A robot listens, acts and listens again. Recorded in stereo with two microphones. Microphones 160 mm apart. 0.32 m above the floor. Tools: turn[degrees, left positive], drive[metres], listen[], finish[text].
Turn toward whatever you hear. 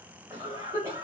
Thought: The cough: about 20° right or 160° right.
Action: turn[-20]
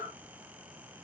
Action: finish[Facing the cough, 1 to 2 m away.]